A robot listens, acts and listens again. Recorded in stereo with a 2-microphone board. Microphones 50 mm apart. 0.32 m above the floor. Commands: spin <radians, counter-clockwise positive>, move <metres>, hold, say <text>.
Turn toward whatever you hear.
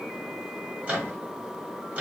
spin -0.52
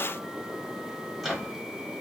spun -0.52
say Facing the microwave, 1 to 2 m away.